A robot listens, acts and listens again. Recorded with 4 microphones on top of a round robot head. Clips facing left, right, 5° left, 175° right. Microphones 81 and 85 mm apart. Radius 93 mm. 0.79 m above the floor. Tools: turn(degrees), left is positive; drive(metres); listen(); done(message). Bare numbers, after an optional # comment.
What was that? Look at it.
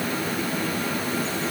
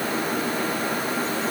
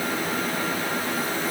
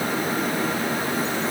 listen()
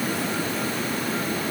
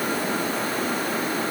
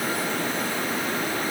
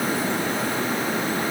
listen()
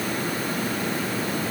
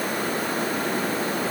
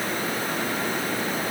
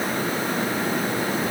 done("I can't make out anything to turn to.")